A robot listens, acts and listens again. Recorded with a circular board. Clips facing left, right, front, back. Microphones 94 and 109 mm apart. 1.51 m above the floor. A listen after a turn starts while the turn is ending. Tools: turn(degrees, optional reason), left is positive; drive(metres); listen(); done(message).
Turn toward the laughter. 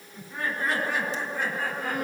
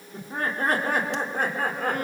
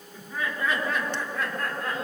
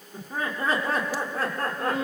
turn(degrees=-130, reason="The laughter: 130° right.")
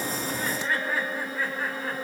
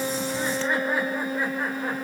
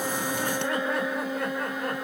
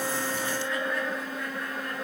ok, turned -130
listen()
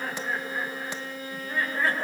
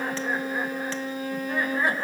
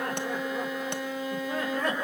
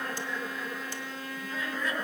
turn(degrees=-20, reason="The laughter is now 20° right.")
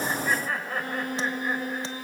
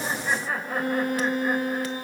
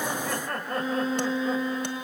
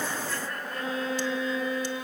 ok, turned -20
turn(degrees=-10, reason="The laughter is now 10° right.")
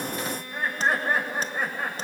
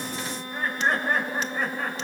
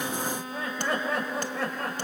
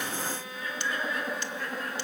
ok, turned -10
done("Found it: laughter, straight ahead.")